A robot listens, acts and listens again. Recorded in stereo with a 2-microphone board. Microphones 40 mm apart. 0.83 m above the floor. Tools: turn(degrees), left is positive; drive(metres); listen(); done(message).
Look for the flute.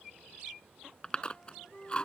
turn(degrees=35)
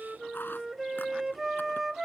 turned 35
done("Found it: a flute, straight ahead.")